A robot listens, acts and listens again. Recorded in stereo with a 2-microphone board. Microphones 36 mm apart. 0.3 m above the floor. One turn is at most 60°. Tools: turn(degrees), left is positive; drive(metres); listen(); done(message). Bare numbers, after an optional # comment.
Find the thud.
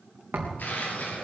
turn(-60)
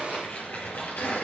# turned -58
# Nothing new. It was at 30° right.
turn(-30)
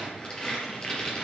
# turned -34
done("I heard a thud from this way, but can't make it out now.")